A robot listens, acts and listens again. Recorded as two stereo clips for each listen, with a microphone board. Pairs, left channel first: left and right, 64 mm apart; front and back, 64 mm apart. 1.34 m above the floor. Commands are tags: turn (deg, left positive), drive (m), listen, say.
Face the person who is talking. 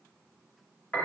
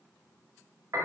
<listen/>
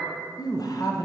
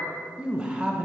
<turn deg="105"/>
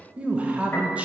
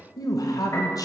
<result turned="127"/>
<turn deg="-20"/>
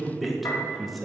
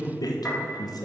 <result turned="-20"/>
<say>Facing the man speaking.</say>